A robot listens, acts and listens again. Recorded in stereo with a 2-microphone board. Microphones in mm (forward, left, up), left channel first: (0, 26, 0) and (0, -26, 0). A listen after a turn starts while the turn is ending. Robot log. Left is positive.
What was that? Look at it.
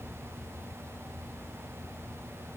cmd idle
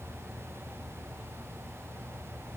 cmd idle
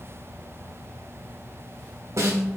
note: The snare drum: about 65° right or 115° right.
cmd yaw -65
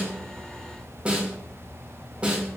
note: So it is at 30° right.
cmd yaw -30
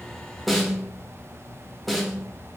end: Found it: a snare drum, straight ahead, under 1 m away.